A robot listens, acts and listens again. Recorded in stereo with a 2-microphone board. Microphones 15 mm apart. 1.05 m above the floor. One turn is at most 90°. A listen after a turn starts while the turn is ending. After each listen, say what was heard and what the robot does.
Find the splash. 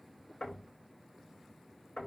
Keep listening.
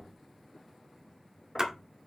The splash: about 50° right or 130° right. Turn 50° right.
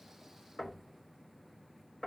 Keep listening.
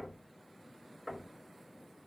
I heard a splash, but can't make it out now. It was about straight ahead or 80° right.